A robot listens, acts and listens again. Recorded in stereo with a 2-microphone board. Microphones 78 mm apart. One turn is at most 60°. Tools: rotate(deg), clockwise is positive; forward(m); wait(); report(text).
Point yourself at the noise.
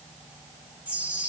rotate(20)
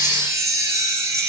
rotate(60)
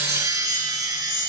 rotate(50)
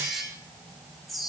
report("Found it: a chime, straight ahead.")